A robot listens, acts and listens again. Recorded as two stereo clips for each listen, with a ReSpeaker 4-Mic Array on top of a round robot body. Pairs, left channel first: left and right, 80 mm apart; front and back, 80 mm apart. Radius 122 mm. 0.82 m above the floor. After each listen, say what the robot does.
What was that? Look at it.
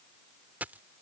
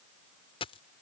Turn 20° right.
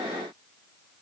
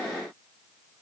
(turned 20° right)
Facing where the dropped coin came from. I can't hear it now.